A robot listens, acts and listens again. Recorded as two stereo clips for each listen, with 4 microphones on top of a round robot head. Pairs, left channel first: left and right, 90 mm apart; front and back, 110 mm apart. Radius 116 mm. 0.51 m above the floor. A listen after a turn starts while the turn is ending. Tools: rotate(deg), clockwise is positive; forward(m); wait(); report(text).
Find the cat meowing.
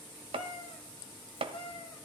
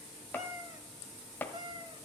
rotate(-140)
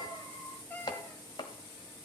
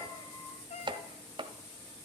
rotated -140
rotate(-25)
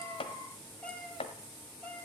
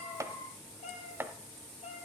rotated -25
rotate(-20)
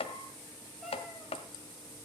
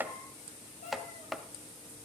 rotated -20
wait()
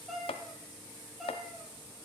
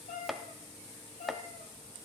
report("Facing the cat meowing, 2 to 4 m away.")